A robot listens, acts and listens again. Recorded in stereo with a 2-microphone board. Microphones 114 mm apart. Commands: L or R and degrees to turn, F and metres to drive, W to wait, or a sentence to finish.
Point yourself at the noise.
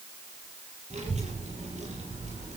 R90
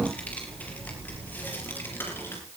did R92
L20
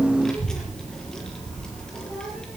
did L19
Facing the child speaking.